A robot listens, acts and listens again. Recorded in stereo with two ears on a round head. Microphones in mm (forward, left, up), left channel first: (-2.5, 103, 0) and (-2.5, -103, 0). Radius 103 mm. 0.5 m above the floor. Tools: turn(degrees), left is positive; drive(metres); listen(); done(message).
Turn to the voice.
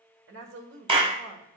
turn(degrees=-55)
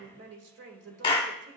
turn(degrees=-60)
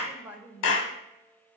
turn(degrees=-10)
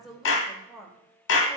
done("Facing the woman speaking.")